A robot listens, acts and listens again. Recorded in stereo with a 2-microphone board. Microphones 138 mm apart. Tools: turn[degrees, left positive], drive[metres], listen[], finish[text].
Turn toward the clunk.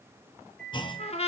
Thought: The clunk: about 35° left or 145° left.
Action: turn[35]
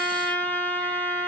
Action: listen[]
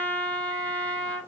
Action: finish[I heard a clunk, but can't make it out now. It was about straight ahead or 110° left.]